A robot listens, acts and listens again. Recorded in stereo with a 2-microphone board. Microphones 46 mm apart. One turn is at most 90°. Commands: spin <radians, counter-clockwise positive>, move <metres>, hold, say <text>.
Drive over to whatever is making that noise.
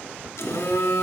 spin 1.31
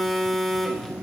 move 1.0
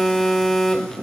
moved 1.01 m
spin 0.17
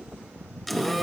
move 1.0
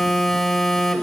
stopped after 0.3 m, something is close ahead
spin 0.17
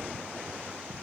hold
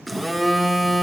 say Arrived at the phone buzzing, straight ahead.